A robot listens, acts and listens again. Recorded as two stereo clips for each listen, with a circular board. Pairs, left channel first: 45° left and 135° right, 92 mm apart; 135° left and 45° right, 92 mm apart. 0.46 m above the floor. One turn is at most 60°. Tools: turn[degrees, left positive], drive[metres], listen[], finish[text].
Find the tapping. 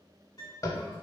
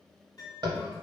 Thought: The tapping: 10° right.
Action: turn[-10]
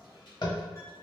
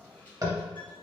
Action: finish[Found it: tapping, straight ahead, under 1 m away.]